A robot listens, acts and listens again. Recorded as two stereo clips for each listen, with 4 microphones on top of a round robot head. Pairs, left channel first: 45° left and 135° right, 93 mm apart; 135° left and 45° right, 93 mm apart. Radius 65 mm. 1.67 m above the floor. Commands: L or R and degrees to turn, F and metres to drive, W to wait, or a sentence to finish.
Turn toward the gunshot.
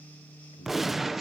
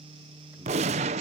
R50
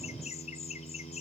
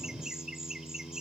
I heard a gunshot from this way, but can't make it out now.